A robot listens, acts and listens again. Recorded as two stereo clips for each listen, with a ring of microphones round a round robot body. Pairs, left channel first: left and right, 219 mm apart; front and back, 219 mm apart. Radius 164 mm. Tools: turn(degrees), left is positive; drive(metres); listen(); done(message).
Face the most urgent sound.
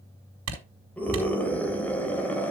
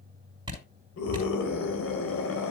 done("Found it: a scream, straight ahead.")